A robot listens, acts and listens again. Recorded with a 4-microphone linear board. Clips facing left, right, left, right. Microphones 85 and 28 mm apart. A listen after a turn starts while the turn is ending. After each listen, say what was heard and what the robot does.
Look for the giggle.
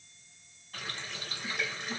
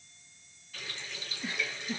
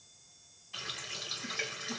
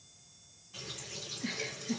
The giggle: about 70° right or 110° right. Turn 70° right.
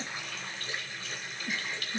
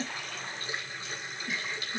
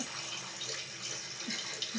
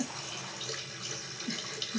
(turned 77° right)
Found it: a giggle, straight ahead, under 1 m away.